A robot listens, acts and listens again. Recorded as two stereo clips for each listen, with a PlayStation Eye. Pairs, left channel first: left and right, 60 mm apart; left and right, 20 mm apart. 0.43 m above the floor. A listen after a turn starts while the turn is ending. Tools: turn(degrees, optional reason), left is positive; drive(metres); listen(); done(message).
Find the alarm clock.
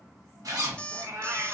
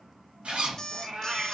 turn(degrees=15, reason="The alarm clock: about 15° left or 165° left.")
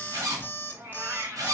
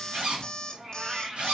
turn(degrees=150, reason="So it is at 150° left.")
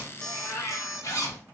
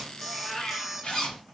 done("Facing the alarm clock.")